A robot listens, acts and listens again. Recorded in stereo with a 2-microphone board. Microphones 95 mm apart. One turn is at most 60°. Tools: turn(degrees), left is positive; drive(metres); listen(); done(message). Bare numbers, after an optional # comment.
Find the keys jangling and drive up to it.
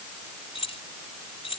turn(60)
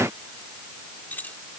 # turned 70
# So it is at 15° left.
turn(15)
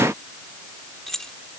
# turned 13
drive(1.0)
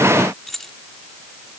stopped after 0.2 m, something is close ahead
done("Blocked. The keys jangling is further on, straight ahead.")